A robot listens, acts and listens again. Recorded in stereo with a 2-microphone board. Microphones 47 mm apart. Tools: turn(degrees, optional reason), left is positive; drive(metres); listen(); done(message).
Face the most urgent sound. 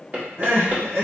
turn(degrees=-70, reason="The crying: about 70° right or 110° right.")
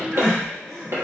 done("Facing the crying.")